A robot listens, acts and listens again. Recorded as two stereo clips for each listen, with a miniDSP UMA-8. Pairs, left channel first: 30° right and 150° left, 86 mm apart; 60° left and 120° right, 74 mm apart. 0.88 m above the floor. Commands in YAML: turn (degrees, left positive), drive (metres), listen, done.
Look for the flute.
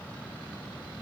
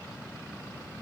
listen: true
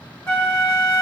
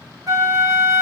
turn: -90
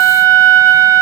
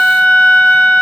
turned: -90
turn: 10
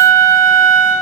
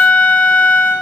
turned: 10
done: "Facing the flute, 1 to 2 m away."